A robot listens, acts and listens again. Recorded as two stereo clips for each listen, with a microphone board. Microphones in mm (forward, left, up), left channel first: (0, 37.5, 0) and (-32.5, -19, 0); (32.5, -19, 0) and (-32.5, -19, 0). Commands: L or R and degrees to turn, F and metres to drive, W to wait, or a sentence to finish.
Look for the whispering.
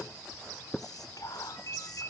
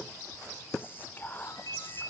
L60
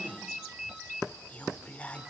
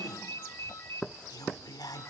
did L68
R10
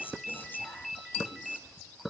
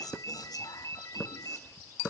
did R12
W
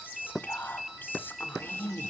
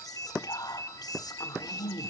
Facing the whispering.